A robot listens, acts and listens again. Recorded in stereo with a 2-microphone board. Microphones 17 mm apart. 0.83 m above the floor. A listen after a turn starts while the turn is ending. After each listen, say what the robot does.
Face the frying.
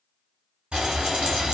Turn 65° right.
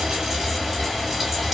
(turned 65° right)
Facing the frying, 1 to 2 m away.